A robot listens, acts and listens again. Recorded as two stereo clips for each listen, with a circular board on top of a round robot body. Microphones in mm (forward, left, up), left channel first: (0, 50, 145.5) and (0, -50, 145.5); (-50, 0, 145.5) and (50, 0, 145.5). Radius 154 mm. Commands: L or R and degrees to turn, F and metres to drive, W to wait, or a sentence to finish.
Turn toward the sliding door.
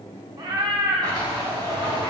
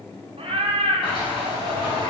R140
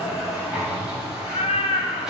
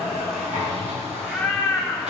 Found it: a sliding door, straight ahead.